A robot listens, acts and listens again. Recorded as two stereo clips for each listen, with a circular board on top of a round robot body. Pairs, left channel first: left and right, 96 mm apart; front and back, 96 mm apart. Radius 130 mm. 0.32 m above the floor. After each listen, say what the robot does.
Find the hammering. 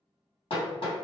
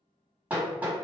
Turn 105° left.
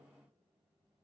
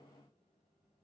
Keep listening.
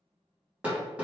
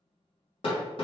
Turn 15° right.
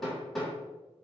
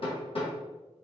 Found it: hammering, straight ahead, 2 to 4 m away.